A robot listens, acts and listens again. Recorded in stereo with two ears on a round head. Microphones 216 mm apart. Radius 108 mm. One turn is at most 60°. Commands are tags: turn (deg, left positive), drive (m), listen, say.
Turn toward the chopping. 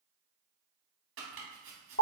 <turn deg="-50"/>
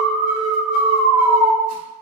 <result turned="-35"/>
<listen/>
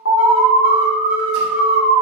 <listen/>
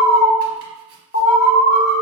<say>I heard chopping, but can't make it out now. It was about 15° right or 95° right.</say>